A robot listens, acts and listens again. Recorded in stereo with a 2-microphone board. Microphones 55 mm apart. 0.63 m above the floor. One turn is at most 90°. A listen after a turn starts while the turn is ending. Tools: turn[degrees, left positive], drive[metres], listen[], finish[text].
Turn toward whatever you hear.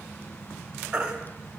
Thought: The baby crying: about 20° right or 160° right.
Action: turn[-20]
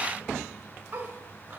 Action: listen[]
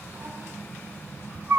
Thought: So it is at 145° right.
Action: turn[-90]
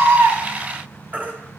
Thought: The baby crying is now 30° right.
Action: turn[-30]
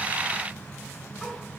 Action: listen[]
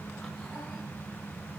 Action: listen[]
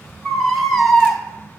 Action: finish[Found it: a baby crying, straight ahead.]